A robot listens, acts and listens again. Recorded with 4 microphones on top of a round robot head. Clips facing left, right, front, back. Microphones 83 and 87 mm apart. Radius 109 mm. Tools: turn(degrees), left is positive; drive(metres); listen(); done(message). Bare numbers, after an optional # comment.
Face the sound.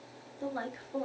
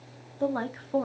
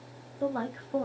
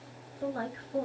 # The woman speaking: 50° right.
turn(-50)
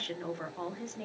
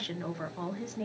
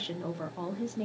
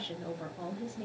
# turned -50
done("Found it: a woman speaking, straight ahead, 1 to 2 m away.")